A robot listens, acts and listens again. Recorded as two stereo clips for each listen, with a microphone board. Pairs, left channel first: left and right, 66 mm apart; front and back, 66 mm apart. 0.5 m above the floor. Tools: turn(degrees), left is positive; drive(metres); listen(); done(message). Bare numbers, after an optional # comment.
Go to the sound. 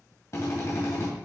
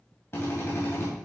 # The drill: 45° left.
turn(45)
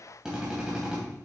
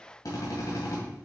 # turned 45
# The drill is now 15° right.
turn(-15)
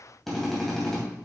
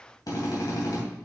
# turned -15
drive(1.0)
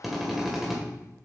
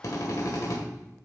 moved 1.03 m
drive(1.0)
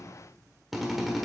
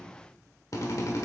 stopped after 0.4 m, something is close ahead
done("I am next to the drill.")